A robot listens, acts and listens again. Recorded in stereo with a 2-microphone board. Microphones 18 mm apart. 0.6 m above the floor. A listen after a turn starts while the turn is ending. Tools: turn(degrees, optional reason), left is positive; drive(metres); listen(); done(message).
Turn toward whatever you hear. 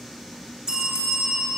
turn(degrees=-50, reason="The bell: about 50° right or 130° right.")
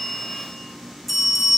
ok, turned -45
done("Found it: a bell, straight ahead.")